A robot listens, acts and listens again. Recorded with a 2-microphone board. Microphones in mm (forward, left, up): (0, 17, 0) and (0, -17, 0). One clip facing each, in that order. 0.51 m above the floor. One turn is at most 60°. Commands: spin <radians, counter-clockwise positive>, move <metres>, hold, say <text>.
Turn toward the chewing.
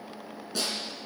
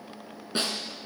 hold
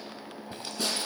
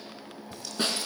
hold
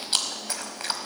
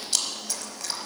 spin 0.70
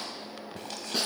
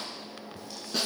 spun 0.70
spin 1.05
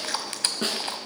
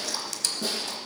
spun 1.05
spin 0.79
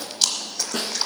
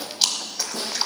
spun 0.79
say Found it: chewing, straight ahead.